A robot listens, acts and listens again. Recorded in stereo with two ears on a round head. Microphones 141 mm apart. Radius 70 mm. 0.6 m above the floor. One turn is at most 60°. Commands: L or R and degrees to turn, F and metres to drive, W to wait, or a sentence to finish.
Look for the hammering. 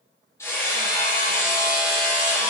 L15
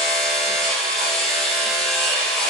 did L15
Facing the hammering.